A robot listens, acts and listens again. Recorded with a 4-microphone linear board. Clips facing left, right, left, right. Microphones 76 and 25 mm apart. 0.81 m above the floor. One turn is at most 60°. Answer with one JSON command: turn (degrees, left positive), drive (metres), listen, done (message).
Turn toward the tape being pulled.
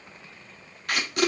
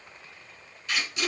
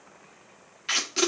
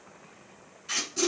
{"turn": 60}
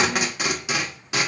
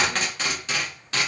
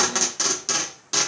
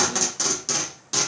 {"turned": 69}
{"turn": 15}
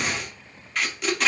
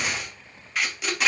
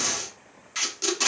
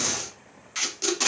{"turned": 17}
{"done": "Found it: tape being pulled, straight ahead."}